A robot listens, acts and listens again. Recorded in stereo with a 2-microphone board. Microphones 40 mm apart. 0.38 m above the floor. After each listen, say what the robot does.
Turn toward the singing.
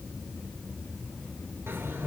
Keep listening.
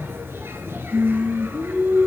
Turn 60° right.
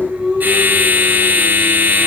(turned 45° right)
Turn 20° right.
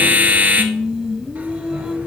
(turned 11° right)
Turn 10° right.
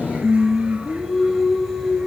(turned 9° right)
Found it: singing, straight ahead.